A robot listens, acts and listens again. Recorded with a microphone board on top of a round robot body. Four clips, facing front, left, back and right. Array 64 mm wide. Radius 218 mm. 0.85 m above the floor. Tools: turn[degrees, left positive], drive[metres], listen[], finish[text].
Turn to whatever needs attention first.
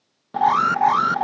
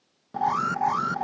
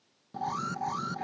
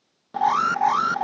Thought: The alarm: 20° right.
Action: turn[-20]
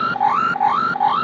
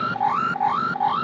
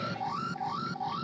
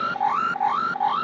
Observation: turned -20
Action: finish[Facing the alarm.]